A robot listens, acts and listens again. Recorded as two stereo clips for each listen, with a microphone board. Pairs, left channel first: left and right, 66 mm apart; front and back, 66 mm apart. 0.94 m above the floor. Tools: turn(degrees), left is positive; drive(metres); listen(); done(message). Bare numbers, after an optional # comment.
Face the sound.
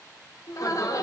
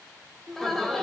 # The laughter: 85° left.
turn(85)
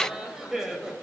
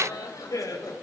# The laughter is now 10° right.
turn(-10)
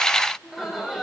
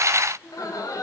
done("Facing the laughter, over 4 m away.")